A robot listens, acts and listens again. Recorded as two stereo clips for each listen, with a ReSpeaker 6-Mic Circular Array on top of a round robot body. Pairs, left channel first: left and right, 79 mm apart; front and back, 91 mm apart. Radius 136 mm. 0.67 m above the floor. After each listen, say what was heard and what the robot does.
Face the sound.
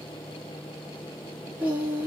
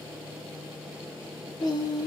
The singing: 25° right. Turn 25° right.
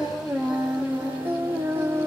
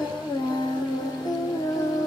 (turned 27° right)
The singing is now 40° right. Turn 40° right.
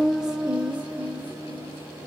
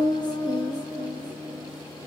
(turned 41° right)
The singing is now 30° right. Turn 30° right.
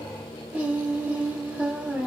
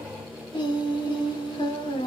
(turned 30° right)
The singing is now 15° right. Turn 15° right.
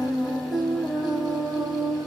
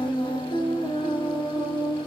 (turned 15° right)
Facing the singing.